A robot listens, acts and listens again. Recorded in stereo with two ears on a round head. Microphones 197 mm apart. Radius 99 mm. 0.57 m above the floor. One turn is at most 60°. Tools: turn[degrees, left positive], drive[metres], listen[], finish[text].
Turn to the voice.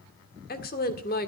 Thought: The woman speaking: about 45° left or 135° left.
Action: turn[45]
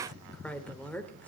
Action: finish[Found it: a woman speaking, straight ahead.]